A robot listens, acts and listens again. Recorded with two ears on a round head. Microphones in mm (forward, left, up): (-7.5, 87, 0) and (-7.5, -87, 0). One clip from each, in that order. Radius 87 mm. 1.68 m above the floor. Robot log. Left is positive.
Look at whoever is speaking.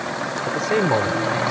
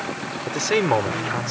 cmd yaw -90
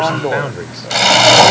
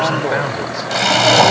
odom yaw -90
note: So it is at 10° right.
cmd yaw -10
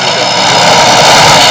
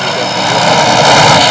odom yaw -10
cmd idle
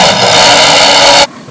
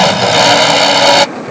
cmd idle
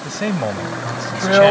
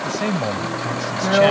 end: Found it: a man speaking, straight ahead.